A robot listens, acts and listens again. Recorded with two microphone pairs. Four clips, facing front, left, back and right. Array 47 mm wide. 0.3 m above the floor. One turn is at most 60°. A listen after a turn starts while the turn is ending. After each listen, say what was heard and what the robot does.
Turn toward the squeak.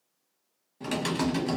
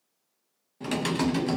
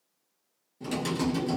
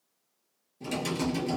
Keep listening.
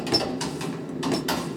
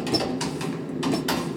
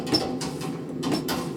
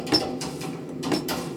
The squeak: 70° right. Turn 60° right.
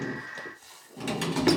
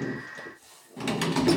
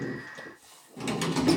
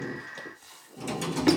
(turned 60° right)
The squeak is now 30° right. Turn 30° right.
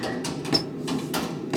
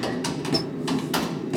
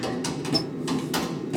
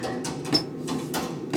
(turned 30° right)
The squeak is now 25° right. Turn 25° right.
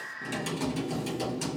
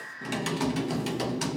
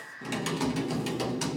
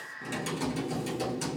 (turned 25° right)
Keep listening.
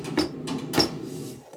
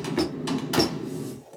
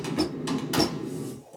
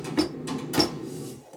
Facing the squeak, under 1 m away.